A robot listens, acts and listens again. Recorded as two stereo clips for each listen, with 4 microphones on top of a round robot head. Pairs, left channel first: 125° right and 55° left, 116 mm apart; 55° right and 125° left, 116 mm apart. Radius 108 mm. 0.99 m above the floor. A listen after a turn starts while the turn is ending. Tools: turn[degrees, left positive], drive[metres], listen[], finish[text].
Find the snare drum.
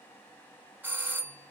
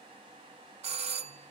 Action: listen[]
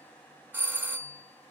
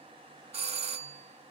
Action: listen[]
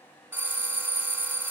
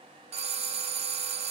Action: finish[I can't make out a snare drum, only a doorbell.]